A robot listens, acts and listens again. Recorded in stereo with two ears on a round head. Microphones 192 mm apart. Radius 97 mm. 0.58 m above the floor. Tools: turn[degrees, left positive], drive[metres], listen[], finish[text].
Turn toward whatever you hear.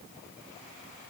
Action: listen[]
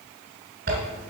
Thought: The zipper: about 55° right or 125° right.
Action: turn[-55]
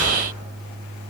Action: listen[]
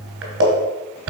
Thought: So it is at 65° right.
Action: turn[-65]
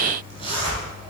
Thought: The zipper is now 30° right.
Action: turn[-30]
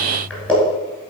Action: finish[Found it: a zipper, straight ahead.]